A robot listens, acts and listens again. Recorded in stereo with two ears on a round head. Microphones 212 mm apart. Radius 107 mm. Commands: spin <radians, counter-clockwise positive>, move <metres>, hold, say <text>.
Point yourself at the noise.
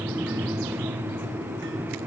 hold
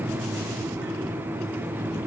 hold
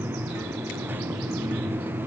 say I can't make out anything.